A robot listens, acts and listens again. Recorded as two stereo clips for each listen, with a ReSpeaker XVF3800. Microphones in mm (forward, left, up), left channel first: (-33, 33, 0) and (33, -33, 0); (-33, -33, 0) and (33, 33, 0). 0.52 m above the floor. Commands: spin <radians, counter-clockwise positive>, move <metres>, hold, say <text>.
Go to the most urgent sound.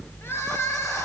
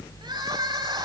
spin 1.31
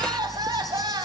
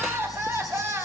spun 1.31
spin -0.26
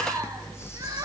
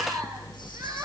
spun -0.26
hold
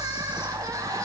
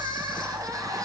move 1.0
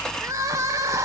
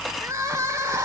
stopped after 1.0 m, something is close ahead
say Arrived at the crying, straight ahead.